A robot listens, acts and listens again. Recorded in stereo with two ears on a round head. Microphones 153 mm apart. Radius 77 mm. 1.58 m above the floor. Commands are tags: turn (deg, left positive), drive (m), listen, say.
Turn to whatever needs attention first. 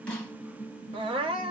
<turn deg="-30"/>
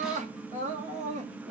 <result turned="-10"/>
<turn deg="-140"/>
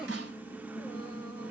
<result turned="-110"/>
<turn deg="-30"/>
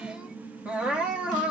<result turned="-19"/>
<turn deg="-10"/>
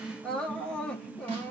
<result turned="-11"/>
<say>Facing the crying.</say>